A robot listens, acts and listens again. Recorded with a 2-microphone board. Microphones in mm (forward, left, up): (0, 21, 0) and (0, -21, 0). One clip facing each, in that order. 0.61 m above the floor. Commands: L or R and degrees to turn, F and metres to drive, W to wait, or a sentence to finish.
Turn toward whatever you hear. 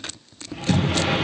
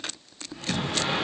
L90
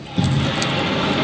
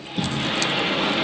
R10
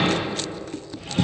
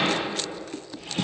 Found it: a sliding door, straight ahead.